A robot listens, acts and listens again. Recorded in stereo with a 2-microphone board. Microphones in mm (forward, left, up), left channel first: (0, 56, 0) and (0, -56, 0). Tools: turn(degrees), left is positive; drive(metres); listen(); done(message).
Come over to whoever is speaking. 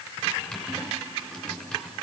listen()
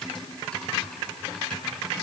listen()
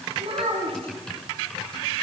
turn(degrees=-55)
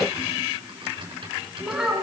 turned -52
drive(metres=1.0)
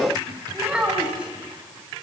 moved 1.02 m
turn(degrees=-10)
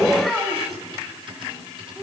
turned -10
drive(metres=1.0)
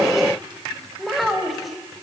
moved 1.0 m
drive(metres=1.0)
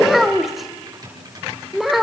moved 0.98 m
drive(metres=1.0)
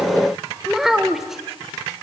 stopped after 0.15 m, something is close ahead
done("I am next to the child speaking.")